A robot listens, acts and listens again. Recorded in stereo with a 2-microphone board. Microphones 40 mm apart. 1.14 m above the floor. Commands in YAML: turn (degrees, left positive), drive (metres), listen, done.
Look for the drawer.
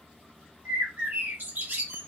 listen: true
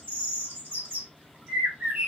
listen: true
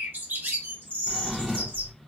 turn: 30
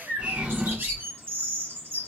turn: -25
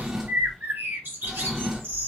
turn: -10
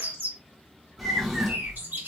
done: "Facing the drawer."